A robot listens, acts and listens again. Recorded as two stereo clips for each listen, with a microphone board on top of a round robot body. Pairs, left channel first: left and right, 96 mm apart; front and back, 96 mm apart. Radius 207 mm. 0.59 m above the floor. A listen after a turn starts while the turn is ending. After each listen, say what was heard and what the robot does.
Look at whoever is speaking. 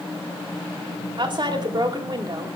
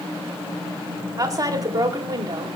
The woman speaking: 135° right. Turn 135° right.
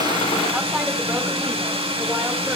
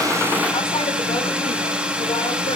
Keep listening.
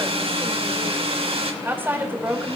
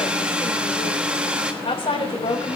The woman speaking is now 20° right. Turn 20° right.
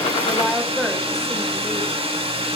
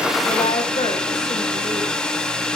Facing the woman speaking, over 4 m away.